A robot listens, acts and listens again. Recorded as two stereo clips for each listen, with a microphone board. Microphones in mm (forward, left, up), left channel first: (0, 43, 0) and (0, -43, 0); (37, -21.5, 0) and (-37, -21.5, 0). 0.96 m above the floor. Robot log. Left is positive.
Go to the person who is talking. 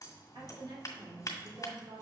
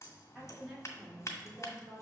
note: The woman speaking: 110° right.
cmd yaw -110
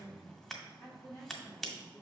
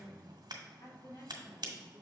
note: The woman speaking is now 25° left.
cmd yaw +25
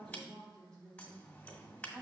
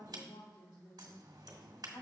note: The woman speaking is now 10° left.
cmd yaw +10
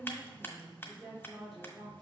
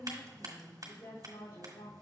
cmd fwd 1.0
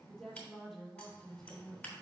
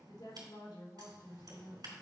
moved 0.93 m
cmd fwd 1.0
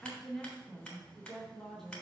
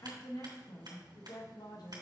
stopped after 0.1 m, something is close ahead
end: Arrived at the woman speaking, straight ahead.